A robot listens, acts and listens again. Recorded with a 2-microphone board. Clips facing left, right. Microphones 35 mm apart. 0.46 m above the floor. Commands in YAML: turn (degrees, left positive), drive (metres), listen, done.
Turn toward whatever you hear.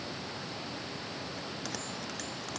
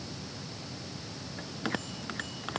turn: -35
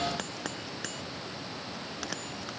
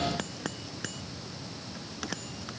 done: "Found it: a bell, straight ahead."